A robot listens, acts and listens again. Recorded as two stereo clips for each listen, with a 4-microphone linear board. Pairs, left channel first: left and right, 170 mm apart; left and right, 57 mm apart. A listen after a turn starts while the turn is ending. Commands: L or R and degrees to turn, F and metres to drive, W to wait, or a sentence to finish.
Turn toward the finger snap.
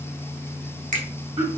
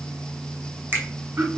R50
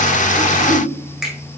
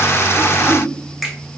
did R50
Facing the finger snap, 2 to 4 m away.